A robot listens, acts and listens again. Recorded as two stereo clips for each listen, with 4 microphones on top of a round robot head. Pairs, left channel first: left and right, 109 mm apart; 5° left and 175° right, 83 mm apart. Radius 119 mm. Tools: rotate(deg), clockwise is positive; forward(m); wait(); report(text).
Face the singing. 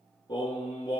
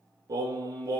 rotate(-145)
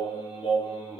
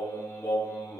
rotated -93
rotate(-60)
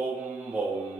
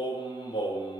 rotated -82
rotate(10)
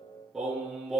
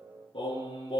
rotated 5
report("Found it: singing, straight ahead.")